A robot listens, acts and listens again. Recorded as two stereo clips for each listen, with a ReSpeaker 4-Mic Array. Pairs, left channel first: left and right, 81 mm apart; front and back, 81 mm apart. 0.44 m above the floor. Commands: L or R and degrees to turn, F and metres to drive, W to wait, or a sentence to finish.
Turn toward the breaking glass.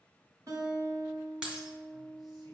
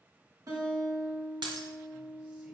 R170
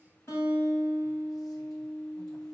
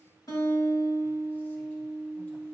Facing where the breaking glass came from. I can't hear it now.